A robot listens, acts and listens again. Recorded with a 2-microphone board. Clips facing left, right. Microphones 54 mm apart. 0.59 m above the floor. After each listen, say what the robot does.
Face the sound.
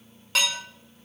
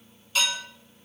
Turn 70° left.
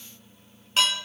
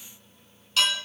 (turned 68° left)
Turn 30° left.
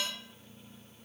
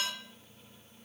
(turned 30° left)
Keep listening.
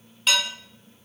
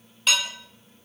Found it: dishes clattering, straight ahead.